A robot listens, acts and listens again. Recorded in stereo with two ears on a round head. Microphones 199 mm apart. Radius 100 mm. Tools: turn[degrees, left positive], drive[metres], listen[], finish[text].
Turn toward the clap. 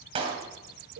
Thought: The clap: about 25° right or 155° right.
Action: turn[-25]
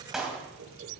Action: finish[Found it: a clap, straight ahead, 2 to 4 m away.]